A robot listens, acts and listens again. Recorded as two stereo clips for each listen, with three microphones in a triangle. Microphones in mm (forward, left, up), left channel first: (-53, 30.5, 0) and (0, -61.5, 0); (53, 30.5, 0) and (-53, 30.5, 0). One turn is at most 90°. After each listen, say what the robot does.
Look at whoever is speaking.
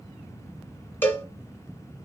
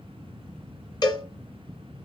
Keep listening.
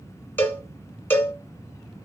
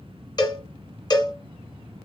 Keep listening.
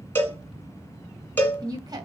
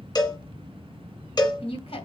Turn 15° right.
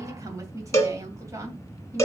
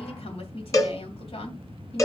Found it: a woman speaking, straight ahead, 2 to 4 m away.